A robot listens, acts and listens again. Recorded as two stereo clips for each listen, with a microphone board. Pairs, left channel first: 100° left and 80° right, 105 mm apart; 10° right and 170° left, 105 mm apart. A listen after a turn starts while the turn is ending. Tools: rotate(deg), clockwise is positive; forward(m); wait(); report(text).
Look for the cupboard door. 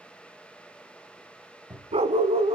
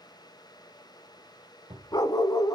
rotate(160)
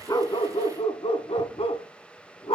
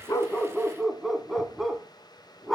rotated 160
wait()
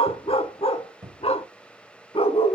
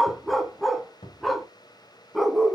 rotate(15)
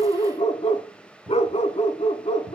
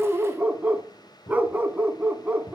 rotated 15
report("Facing the cupboard door, 1 to 2 m away.")